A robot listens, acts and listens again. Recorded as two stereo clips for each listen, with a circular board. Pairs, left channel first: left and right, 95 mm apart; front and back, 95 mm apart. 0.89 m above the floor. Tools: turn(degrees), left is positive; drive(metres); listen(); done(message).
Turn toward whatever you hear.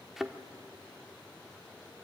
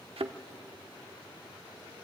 turn(degrees=-175)
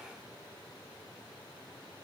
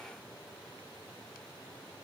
done("I heard a thud from this way, but can't make it out now.")